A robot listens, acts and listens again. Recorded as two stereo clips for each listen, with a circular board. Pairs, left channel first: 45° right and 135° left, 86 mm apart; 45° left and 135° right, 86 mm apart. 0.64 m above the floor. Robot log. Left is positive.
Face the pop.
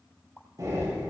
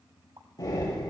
note: The pop: 120° right.
cmd yaw -120
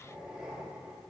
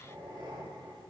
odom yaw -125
end: I heard a pop from this way, but can't make it out now.